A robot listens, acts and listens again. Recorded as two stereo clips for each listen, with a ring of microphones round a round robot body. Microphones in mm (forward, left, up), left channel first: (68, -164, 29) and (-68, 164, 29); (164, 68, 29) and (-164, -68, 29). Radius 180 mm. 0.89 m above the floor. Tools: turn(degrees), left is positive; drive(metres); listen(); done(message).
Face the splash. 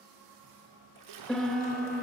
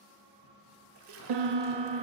turn(degrees=150)
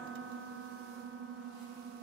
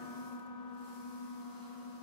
done("Facing where the splash came from. I can't hear it now.")